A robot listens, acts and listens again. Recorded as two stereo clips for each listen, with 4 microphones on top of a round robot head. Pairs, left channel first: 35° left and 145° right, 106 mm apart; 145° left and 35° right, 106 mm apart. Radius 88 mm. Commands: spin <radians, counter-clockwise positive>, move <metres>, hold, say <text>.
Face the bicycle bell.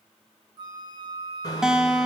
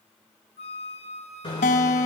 spin 1.66
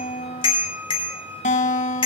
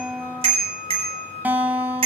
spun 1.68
say Found it: a bicycle bell, straight ahead, over 4 m away.